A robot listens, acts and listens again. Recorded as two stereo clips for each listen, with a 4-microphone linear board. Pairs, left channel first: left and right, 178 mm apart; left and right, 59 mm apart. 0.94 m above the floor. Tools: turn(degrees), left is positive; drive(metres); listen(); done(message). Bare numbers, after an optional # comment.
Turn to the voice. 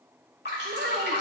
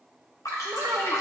# The child speaking: about 70° right or 110° right.
turn(-70)
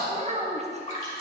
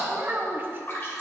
# So it is at 40° right.
turn(-40)
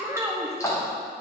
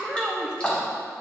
# The child speaking is now 15° right.
turn(-15)
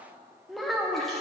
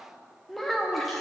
done("Found it: a child speaking, straight ahead.")